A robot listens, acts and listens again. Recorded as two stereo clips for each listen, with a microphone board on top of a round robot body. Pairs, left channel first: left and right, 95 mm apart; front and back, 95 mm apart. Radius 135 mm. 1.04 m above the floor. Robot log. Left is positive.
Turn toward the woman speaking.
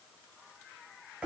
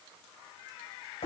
cmd idle
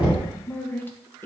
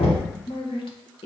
note: The woman speaking: 20° left.
cmd yaw +20
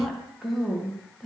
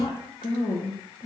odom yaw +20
end: Found it: a woman speaking, straight ahead.